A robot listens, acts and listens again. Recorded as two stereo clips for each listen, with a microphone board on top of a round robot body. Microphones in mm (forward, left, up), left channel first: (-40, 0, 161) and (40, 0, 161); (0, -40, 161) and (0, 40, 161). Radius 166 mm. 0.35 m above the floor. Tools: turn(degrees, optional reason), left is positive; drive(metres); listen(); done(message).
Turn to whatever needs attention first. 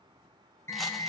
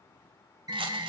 turn(degrees=125, reason="The alarm: 125° left.")
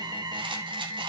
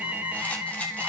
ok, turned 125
turn(degrees=20, reason="The alarm is now 20° left.")
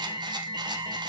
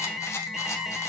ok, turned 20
done("Facing the alarm, 1 to 2 m away.")